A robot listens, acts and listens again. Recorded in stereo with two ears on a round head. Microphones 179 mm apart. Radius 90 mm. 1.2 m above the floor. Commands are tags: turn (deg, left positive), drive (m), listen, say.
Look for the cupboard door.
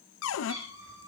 <turn deg="90"/>
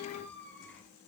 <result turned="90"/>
<listen/>
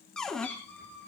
<say>Facing the cupboard door.</say>